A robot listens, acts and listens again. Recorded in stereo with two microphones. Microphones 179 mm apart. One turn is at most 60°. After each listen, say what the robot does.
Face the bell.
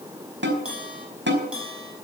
Turn 30° right.
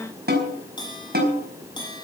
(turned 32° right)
Turn 25° left.
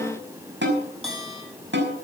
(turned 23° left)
Found it: a bell, straight ahead, over 4 m away.